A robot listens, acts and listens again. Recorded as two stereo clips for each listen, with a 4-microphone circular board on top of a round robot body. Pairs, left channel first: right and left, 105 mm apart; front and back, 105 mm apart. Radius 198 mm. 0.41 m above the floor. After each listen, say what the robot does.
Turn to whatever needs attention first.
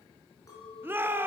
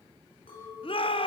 Turn 20° left.
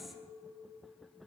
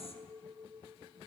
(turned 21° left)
Keep listening.
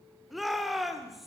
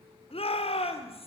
Facing the shout.